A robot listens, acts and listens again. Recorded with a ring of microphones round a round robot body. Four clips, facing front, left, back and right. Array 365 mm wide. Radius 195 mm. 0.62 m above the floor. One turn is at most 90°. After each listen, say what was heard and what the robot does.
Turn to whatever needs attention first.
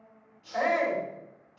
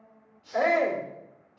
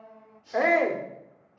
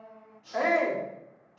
The shout: 175° right. Turn 90° right.
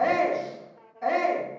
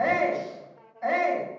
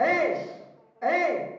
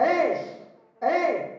The shout is now 105° right. Turn 90° right.
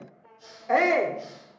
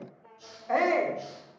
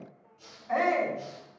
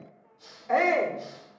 Found it: a shout, straight ahead.